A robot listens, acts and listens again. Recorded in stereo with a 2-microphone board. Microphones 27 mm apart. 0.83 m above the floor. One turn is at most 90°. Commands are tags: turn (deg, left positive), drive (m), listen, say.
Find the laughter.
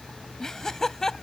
<turn deg="20"/>
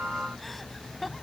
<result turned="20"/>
<turn deg="30"/>
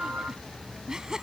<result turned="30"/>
<turn deg="-25"/>
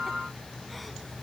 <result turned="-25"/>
<listen/>
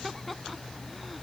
<say>Found it: laughter, straight ahead.</say>